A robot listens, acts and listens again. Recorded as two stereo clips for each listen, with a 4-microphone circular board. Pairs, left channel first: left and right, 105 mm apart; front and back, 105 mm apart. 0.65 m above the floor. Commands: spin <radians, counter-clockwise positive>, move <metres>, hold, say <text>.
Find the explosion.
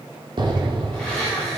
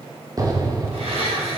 spin -2.27
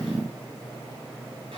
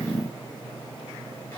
say Facing where the explosion came from. I can't hear it now.